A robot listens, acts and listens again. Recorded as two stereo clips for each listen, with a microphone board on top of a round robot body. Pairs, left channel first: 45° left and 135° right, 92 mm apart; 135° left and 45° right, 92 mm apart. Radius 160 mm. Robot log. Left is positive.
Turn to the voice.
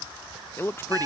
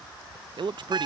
note: The man speaking: 20° right.
cmd yaw -20
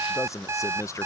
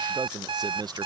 note: The man speaking is now 10° right.
cmd yaw -10
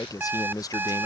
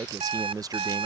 end: Found it: a man speaking, straight ahead.